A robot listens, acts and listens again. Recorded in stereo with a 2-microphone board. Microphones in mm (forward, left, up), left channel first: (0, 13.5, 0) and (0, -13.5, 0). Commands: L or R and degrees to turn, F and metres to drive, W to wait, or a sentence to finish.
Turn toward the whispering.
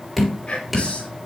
L35
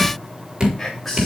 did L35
Found it: whispering, straight ahead.